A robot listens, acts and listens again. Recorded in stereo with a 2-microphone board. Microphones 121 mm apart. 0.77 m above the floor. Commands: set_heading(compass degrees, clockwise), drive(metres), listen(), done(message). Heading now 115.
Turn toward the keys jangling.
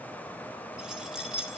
set_heading(145)
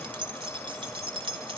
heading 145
set_heading(280)
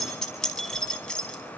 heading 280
done("Found it: keys jangling, straight ahead, over 4 m away.")